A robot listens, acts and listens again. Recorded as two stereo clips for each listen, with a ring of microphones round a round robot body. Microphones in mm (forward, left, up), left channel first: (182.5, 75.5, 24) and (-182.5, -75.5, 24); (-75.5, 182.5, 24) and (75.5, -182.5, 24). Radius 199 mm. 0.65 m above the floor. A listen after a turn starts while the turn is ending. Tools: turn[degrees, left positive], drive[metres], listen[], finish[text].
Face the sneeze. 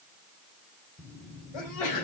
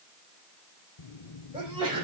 Thought: The sneeze: 10° left.
Action: turn[10]
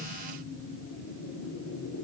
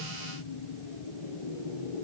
Action: finish[Facing where the sneeze came from. I can't hear it now.]